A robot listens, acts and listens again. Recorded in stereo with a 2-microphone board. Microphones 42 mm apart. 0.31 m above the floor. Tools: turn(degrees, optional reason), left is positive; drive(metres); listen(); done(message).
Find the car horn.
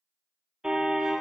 turn(degrees=-15, reason="The car horn: about 15° right or 165° right.")
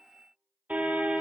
turn(degrees=-145, reason="So it is at 145° right.")
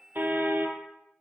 turn(degrees=-55, reason="The car horn is now 55° right.")
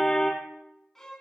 turn(degrees=10, reason="The car horn is now 10° left.")
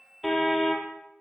done("Found it: a car horn, straight ahead.")